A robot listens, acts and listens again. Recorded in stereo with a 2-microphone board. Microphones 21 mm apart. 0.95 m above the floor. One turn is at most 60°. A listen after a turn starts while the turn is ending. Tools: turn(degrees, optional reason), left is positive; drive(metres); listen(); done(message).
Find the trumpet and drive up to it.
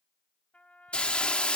turn(degrees=60)
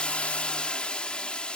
turn(degrees=30, reason="Nothing new. It was at 30° left.")
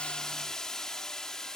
listen()
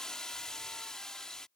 done("I heard a trumpet from this way, but can't make it out now. I did not reach it.")